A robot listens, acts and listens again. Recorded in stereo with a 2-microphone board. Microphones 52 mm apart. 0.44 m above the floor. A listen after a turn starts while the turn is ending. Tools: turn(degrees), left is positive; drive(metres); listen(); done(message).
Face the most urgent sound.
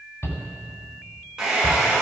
turn(degrees=55)
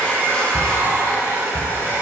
turn(degrees=65)
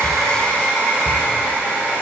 listen()
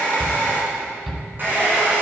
done("Found it: a shout, straight ahead, 2 to 4 m away.")